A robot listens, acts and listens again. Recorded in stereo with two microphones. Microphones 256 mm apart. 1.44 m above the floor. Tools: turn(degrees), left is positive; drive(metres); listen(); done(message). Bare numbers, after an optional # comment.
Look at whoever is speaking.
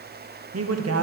# The man speaking: about 70° right or 110° right.
turn(-70)
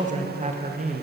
# So it is at 30° right.
turn(-30)
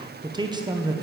# The man speaking is now 15° right.
turn(-15)
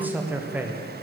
done("Found it: a man speaking, straight ahead.")